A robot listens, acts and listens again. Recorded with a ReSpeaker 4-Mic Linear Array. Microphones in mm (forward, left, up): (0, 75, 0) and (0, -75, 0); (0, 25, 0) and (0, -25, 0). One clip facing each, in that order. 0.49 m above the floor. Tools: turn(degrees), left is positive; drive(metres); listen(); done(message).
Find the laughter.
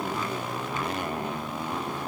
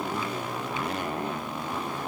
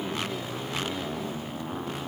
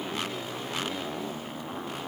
listen()
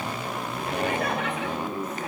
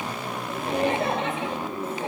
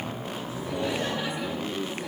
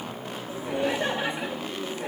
turn(degrees=-30)
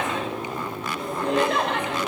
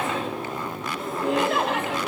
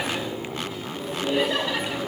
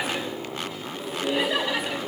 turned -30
done("Facing the laughter, over 4 m away.")